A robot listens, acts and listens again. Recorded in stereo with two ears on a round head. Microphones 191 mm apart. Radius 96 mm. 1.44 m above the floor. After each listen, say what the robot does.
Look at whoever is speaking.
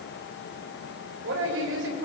Turn 60° right.
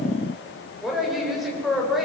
Found it: a woman speaking, straight ahead.